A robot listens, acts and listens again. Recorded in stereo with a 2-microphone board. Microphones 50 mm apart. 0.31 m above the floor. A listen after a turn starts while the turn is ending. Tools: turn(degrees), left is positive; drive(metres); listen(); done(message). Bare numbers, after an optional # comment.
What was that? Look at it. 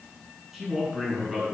turn(-30)
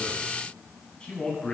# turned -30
# So it is at 20° left.
turn(20)
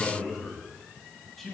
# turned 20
done("Facing the man speaking, 2 to 4 m away.")